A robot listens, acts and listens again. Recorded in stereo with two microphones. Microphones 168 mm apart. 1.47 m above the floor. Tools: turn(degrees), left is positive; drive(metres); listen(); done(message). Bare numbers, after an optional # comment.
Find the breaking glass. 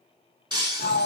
# The breaking glass: about 30° right or 150° right.
turn(-30)
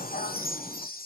listen()
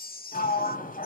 done("I heard breaking glass, but can't make it out now. It was about straight ahead or 120° right.")